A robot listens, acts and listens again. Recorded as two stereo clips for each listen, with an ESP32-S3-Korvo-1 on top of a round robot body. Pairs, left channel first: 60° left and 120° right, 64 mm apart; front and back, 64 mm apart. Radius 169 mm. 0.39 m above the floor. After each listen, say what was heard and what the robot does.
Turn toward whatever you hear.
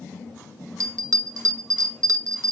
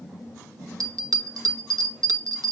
The bell: 155° right. Turn 155° right.
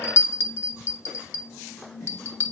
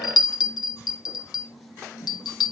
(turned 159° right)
The bell is now 10° left. Turn 10° left.
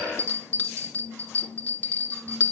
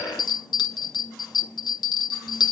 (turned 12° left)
Found it: a bell, straight ahead, 1 to 2 m away.